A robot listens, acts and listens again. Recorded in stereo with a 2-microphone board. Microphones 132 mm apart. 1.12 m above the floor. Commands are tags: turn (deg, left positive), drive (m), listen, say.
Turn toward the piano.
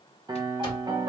<turn deg="-35"/>
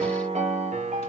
<turn deg="-105"/>
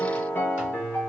<turn deg="15"/>
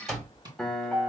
<say>Found it: a piano, straight ahead, under 1 m away.</say>